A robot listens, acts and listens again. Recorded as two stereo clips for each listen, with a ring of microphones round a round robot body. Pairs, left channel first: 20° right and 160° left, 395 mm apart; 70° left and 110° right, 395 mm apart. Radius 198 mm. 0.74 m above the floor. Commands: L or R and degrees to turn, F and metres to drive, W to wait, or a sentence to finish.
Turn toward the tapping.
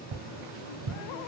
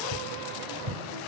R165
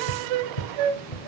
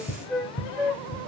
Facing the tapping, 1 to 2 m away.